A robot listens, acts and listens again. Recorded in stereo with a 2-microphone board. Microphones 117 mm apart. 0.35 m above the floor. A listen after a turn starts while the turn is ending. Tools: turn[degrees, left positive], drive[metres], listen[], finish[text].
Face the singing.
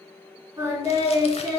Thought: The singing: about 35° right or 145° right.
Action: turn[-35]
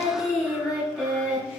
Action: finish[Facing the singing.]